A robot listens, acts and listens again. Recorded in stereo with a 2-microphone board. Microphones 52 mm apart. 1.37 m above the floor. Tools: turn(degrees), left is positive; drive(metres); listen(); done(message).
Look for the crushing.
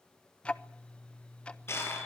turn(degrees=60)
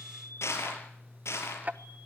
turn(degrees=65)
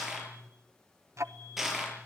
done("Found it: crushing, straight ahead, over 4 m away.")